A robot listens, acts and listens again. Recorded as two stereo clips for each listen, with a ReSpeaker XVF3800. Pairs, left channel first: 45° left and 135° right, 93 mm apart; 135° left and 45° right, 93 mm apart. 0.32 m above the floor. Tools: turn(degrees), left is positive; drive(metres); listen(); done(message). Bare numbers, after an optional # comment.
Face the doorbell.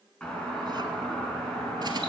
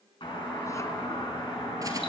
# The doorbell: 125° left.
turn(125)
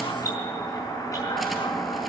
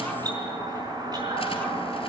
done("Found it: a doorbell, straight ahead, over 4 m away.")